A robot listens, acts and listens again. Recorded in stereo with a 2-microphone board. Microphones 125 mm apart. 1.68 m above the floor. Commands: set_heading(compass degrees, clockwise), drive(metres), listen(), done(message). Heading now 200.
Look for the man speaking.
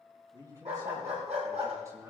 set_heading(225)
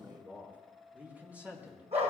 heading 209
set_heading(239)
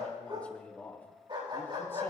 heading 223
set_heading(208)
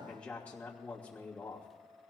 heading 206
set_heading(196)
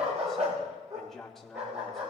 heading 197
done("Found it: a man speaking, straight ahead.")